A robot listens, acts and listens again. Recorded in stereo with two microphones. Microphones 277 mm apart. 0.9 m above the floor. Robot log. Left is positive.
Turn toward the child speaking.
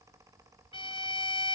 cmd idle
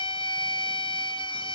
cmd idle
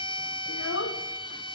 note: The child speaking: about 65° left or 115° left.
cmd yaw +65
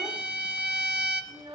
note: So it is at 20° right.
cmd yaw -20
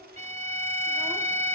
cmd idle
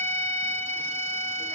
cmd idle
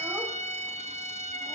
end: I heard a child speaking from this way, but can't make it out now.